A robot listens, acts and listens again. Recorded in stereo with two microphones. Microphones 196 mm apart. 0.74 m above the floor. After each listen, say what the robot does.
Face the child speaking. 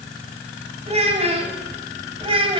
Turn 25° right.
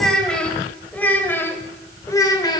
Turn 20° left.
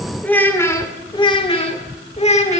Turn 30° left.
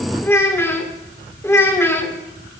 Turn 10° left.
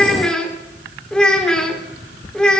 Facing the child speaking, 1 to 2 m away.